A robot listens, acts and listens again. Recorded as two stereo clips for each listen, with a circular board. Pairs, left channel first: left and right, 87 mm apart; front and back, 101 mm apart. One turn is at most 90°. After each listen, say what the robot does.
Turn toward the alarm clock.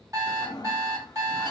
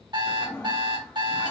Turn 90° right.
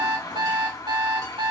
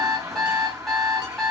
Turn 85° right.
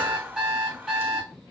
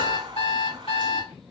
Facing the alarm clock.